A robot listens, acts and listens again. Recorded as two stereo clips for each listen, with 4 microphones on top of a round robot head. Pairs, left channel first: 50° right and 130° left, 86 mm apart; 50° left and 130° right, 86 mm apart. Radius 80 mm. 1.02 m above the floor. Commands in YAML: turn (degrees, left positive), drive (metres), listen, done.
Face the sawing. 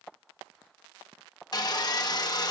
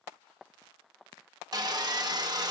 turn: -90
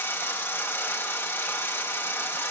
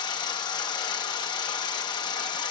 turn: 15
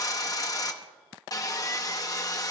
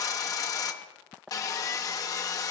done: "Found it: sawing, straight ahead, 1 to 2 m away."